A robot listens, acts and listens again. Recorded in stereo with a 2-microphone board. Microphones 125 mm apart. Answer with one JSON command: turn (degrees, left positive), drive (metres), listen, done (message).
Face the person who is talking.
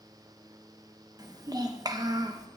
{"turn": -30}
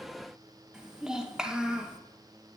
{"done": "Facing the child speaking, under 1 m away."}